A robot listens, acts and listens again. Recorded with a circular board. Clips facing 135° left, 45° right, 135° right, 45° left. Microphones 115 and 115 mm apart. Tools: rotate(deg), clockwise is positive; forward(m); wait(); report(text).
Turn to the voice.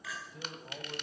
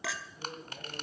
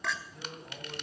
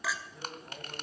rotate(-135)
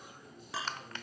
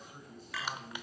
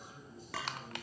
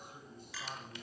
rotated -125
rotate(-10)
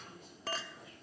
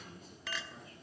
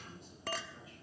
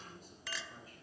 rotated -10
wait()
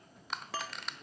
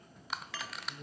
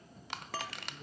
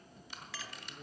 report("Found it: a man speaking, straight ahead.")